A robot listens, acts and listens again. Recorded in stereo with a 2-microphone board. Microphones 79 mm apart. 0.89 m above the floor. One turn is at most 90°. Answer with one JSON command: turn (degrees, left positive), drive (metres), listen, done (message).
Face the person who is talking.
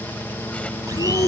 {"turn": 60}
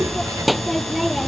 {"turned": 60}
{"done": "Facing the child speaking."}